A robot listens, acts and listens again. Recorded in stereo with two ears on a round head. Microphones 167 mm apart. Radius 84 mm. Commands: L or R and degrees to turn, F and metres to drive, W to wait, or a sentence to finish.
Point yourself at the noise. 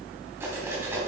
R30
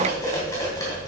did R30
L15
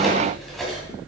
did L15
Found it: cutlery clinking, straight ahead, 2 to 4 m away.